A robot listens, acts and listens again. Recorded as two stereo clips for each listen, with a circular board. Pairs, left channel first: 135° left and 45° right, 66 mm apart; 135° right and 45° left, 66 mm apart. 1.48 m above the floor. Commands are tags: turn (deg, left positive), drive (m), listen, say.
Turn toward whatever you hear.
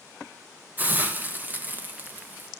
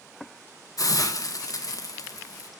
<turn deg="-110"/>
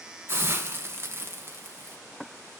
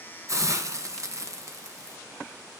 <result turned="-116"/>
<say>Found it: a hiss, straight ahead, 1 to 2 m away.</say>